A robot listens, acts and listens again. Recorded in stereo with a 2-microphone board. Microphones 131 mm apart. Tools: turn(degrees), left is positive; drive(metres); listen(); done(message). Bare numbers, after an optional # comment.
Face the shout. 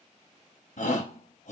# The shout: about 65° left or 115° left.
turn(65)
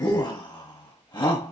# So it is at 35° left.
turn(35)
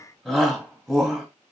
done("Facing the shout, 1 to 2 m away.")